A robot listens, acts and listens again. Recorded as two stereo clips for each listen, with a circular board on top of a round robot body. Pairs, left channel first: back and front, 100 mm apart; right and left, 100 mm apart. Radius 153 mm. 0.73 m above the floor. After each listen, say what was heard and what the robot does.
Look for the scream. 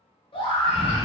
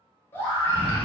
The scream: 155° right. Turn 155° right.
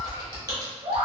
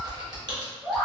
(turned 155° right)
Facing the scream.